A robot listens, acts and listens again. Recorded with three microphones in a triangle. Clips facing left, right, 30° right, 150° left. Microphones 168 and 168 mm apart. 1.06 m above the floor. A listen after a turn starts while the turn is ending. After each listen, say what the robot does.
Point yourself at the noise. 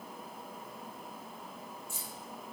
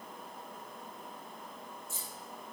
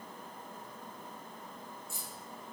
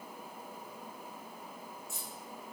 Turn 165° left.
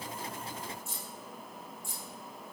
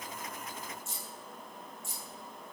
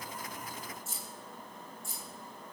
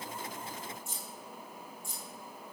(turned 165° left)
Turn 60° left.
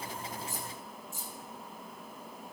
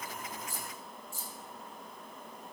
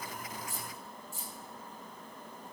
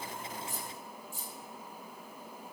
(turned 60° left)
Turn 20° left.
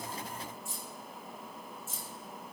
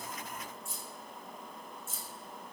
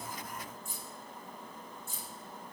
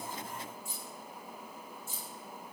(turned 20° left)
Facing the keys jangling.